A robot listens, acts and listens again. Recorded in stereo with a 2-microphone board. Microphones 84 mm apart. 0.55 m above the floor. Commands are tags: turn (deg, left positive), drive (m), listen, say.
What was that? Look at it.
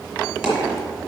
<turn deg="-30"/>
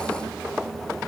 <listen/>
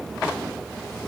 <say>I heard a dropped coin, but can't make it out now. It was about 20° left or 140° right.</say>